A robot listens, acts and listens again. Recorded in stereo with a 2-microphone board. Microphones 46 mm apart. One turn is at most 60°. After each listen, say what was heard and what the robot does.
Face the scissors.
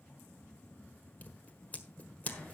The scissors: about 35° left or 145° left. Turn 35° left.
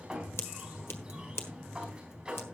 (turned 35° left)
So it is at 105° left. Turn 60° left.
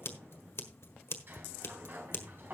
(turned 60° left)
The scissors is now 70° left. Turn 60° left.
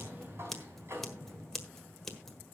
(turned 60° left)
The scissors is now 10° left. Turn 10° left.
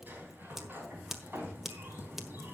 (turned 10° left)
Found it: scissors, straight ahead, 1 to 2 m away.